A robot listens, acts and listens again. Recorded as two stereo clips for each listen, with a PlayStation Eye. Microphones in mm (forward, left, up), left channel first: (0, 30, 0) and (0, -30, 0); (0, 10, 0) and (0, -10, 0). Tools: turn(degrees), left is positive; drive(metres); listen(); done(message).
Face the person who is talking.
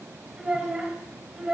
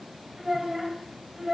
turn(degrees=-30)
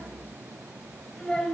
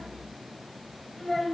turn(degrees=15)
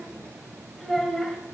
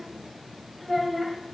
done("Found it: a child speaking, straight ahead, 2 to 4 m away.")